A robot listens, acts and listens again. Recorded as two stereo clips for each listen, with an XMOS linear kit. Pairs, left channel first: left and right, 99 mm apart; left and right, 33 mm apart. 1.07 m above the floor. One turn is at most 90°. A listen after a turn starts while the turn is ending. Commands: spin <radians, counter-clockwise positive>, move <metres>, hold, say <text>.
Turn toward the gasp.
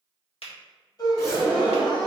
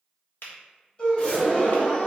spin 0.70
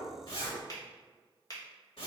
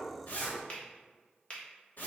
hold
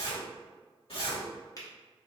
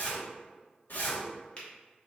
say I heard a gasp, but can't make it out now. It was about straight ahead or 100° left.